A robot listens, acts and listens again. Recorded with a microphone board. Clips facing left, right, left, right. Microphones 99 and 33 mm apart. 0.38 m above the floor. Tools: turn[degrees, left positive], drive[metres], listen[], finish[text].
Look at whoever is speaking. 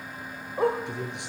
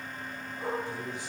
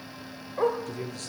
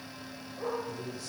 Thought: The man speaking: about 70° left or 110° left.
Action: turn[70]
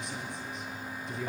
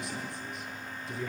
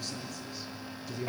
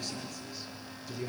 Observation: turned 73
Action: finish[Found it: a man speaking, straight ahead.]